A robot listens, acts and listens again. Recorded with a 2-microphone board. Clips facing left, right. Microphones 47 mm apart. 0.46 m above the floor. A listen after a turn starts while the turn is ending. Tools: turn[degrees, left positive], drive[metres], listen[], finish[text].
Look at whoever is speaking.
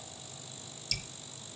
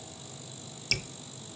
Action: listen[]
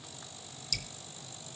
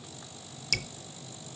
Action: listen[]
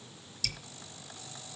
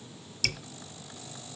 Action: finish[I can't make out anyone speaking, only dripping.]